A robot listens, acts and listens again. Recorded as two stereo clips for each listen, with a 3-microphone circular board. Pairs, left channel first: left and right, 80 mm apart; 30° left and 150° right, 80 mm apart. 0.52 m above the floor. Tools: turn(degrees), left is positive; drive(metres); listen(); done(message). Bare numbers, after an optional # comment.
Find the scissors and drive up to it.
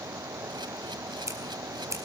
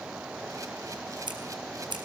# The scissors: 140° right.
turn(-140)
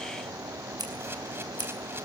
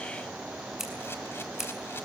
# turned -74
# The scissors is now 65° right.
turn(-65)
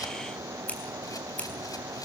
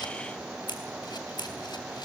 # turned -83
# The scissors is now 20° left.
turn(20)
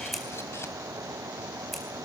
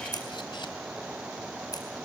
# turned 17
drive(1.0)
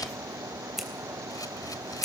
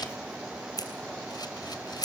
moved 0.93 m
drive(1.0)
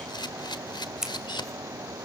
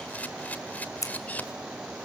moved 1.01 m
drive(1.0)
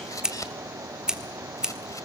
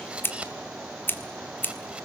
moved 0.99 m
# The scissors is now 15° right.
turn(-15)
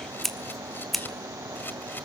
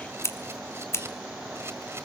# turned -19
drive(1.0)
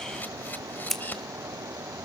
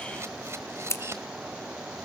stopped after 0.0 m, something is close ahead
done("Arrived at the scissors, straight ahead.")